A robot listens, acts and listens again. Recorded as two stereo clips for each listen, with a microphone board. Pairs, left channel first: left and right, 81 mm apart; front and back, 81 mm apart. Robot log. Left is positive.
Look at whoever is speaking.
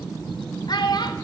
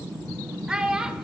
note: The child speaking: 100° left.
cmd yaw +100
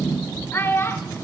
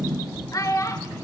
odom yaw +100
note: The child speaking is now 35° left.
cmd yaw +35
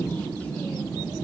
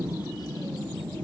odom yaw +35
cmd idle
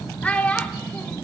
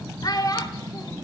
note: The child speaking is now 20° left.
cmd yaw +20
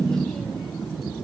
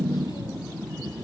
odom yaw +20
cmd idle
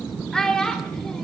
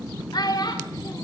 note: The child speaking is now 10° left.
cmd yaw +10
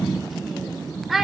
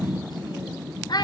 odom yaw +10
end: Facing the child speaking, under 1 m away.